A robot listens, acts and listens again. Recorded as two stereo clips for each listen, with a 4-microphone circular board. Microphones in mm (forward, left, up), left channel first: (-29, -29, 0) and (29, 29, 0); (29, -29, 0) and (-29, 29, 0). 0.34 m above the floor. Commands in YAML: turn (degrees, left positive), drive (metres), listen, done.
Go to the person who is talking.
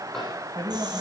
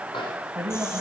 turn: 65
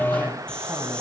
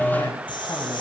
drive: 1.0
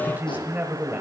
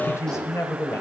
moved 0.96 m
turn: -15
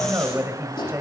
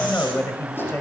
drive: 1.0
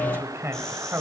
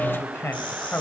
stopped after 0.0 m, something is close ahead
done: "Arrived at the man speaking, straight ahead."